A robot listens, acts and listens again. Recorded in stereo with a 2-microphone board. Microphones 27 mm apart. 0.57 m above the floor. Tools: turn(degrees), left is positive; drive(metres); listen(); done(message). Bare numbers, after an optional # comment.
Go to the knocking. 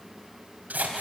listen()
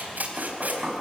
# The knocking: about 25° right or 155° right.
turn(-25)
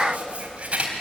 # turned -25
listen()
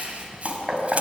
drive(1.0)
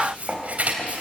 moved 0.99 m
drive(1.0)
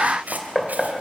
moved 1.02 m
drive(1.0)
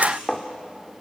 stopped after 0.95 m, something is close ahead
done("I am next to the knocking.")